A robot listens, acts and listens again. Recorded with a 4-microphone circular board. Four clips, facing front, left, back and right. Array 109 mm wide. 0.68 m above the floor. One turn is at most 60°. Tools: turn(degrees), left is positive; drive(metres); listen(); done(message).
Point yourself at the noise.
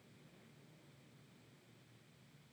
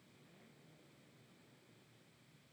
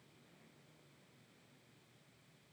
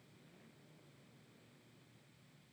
listen()
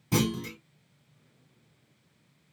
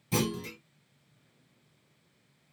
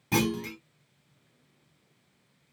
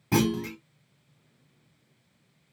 turn(degrees=-60)
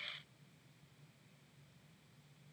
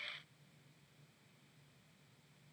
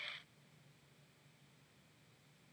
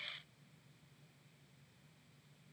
turn(degrees=-50)
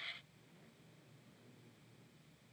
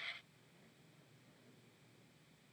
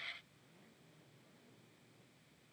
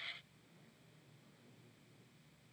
done("I heard a clunk from this way, but can't make it out now.")